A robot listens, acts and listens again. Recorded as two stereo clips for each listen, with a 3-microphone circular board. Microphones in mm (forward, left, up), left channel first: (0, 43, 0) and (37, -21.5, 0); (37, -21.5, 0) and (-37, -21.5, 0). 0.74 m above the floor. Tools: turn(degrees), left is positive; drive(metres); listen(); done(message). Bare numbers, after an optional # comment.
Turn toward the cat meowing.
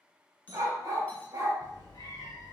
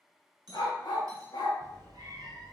# The cat meowing: 150° left.
turn(150)
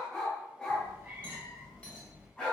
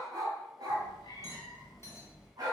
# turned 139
# The cat meowing is now 10° left.
turn(10)
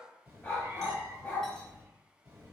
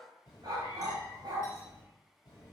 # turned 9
done("Found it: a cat meowing, straight ahead.")